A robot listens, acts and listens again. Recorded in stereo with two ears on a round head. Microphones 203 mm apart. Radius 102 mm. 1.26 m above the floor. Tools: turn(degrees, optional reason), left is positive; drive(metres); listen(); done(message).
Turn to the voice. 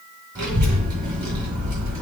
turn(degrees=-20, reason="The child speaking: about 20° right or 160° right.")
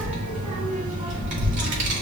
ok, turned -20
turn(degrees=-145, reason="So it is at 145° right.")
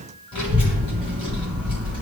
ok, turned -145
turn(degrees=25, reason="The child speaking is now 25° left.")
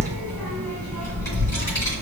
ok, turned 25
turn(degrees=15, reason="The child speaking is now 15° left.")
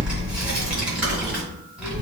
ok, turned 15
done("Facing the child speaking.")